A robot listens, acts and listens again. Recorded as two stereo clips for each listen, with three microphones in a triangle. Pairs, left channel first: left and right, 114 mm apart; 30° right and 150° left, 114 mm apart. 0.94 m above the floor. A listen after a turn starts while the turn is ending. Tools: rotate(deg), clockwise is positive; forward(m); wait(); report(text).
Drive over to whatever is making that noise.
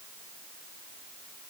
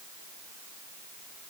wait()
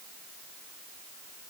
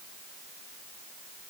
wait()
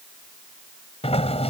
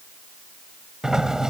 rotate(-65)
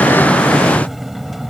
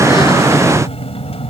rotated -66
forward(1.0)
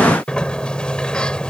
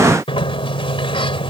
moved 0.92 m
rotate(-10)
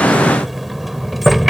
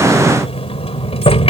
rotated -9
forward(1.0)
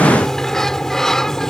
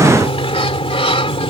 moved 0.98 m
forward(1.0)
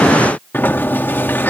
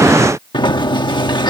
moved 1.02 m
rotate(-20)
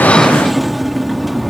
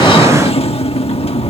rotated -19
forward(1.0)
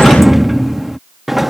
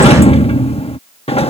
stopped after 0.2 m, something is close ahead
report("Arrived at the sliding door, straight ahead.")